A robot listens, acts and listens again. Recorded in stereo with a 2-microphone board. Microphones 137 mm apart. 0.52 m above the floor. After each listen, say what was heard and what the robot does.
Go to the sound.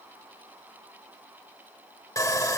The sawing: about 25° left or 155° left. Turn 25° left.
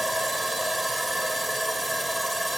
Drive 1.0 m forward.
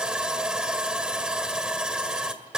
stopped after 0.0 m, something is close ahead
Blocked. The sawing is further on, straight ahead.